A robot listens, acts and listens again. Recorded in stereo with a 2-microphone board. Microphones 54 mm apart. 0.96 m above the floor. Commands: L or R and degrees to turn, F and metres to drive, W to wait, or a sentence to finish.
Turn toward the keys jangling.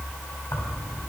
L90
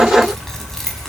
Facing the keys jangling, over 4 m away.